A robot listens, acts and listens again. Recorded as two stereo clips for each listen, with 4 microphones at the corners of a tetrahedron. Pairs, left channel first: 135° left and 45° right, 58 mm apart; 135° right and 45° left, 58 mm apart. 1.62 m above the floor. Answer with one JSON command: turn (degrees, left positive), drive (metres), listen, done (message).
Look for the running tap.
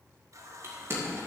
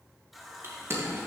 {"turn": -40}
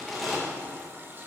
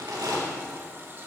{"done": "Facing the running tap."}